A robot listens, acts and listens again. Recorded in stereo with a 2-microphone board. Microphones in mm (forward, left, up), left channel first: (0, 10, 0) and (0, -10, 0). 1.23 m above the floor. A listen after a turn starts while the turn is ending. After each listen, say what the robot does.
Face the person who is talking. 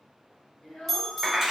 Turn 75° left.
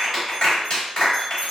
Keep listening.
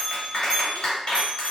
Keep listening.
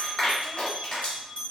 I heard a child speaking, but can't make it out now. It was about straight ahead or 30° left.